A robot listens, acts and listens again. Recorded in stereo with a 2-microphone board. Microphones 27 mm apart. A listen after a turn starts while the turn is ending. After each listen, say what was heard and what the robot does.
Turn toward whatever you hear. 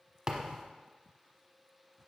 The thud: about 30° right or 150° right. Turn 30° right.
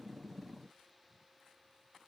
Keep listening.
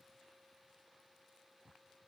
I heard a thud, but can't make it out now. It was about straight ahead or 120° right.